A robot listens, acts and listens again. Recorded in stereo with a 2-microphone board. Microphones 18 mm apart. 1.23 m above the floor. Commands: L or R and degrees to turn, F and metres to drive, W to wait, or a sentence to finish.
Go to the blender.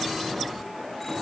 W
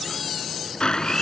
L60
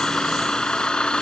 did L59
L60
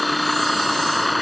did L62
F1.0
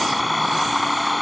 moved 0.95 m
R10
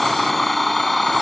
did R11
F1.0
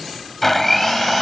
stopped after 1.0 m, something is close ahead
I am next to the blender.